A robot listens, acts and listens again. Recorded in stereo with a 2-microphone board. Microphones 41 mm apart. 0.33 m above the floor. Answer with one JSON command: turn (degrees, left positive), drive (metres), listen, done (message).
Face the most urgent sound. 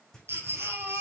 {"turn": -90}
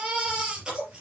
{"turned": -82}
{"turn": -20}
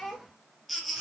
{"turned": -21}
{"done": "Facing the baby crying, 2 to 4 m away."}